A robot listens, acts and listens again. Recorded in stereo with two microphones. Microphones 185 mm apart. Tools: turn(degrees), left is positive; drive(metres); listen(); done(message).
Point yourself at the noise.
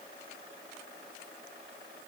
listen()
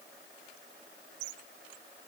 listen()
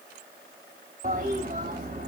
turn(degrees=-50)
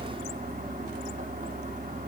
turn(degrees=-65)
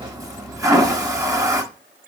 turn(degrees=-20)
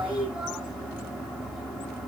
done("Found it: a toilet flushing, straight ahead.")